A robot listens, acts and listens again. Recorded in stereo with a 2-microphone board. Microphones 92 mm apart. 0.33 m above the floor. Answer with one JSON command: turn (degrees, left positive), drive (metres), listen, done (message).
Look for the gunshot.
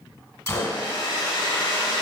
{"turn": 35}
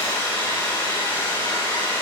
{"listen": true}
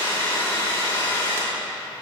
{"done": "I heard a gunshot, but can't make it out now. It was about straight ahead or 110° left."}